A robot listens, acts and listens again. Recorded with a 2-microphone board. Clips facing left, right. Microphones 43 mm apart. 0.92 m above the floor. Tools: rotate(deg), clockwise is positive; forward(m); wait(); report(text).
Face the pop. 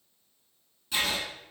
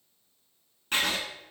wait()
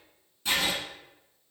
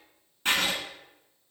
wait()
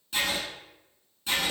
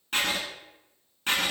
report("I can't make out a pop, only writing.")